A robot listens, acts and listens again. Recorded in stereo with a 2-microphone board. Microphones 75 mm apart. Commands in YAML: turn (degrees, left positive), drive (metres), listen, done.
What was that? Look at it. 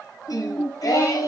turn: 50
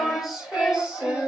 turn: -15
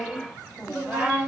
turn: -20
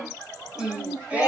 turn: -20
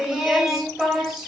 turn: -10
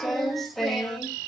done: "Facing the singing, 1 to 2 m away."